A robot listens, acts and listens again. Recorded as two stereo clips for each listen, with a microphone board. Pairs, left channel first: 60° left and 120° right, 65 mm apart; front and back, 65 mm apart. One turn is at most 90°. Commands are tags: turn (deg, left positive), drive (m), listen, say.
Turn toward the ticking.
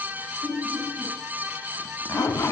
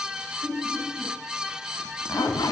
<listen/>
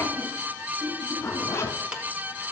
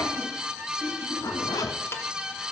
<turn deg="-50"/>
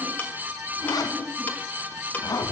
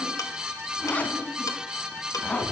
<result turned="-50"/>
<listen/>
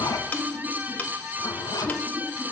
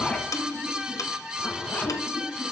<say>Facing the ticking, 1 to 2 m away.</say>